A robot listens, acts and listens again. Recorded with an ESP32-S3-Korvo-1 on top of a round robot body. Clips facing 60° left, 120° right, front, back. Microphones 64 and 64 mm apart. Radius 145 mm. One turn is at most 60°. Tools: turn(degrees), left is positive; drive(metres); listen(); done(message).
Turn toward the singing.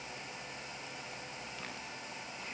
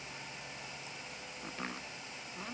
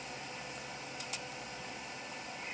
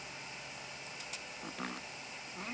listen()
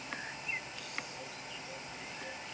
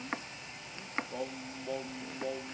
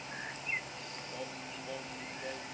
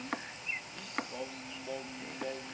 turn(degrees=-60)
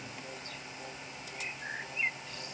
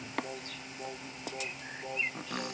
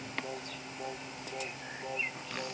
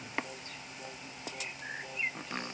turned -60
turn(degrees=-60)
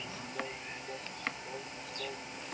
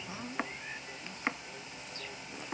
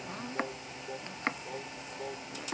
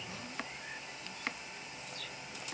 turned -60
listen()
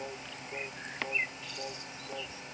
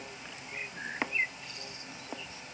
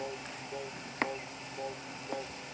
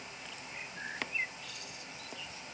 listen()
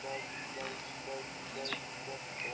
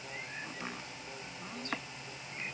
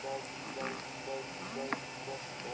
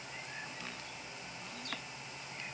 done("Facing the singing.")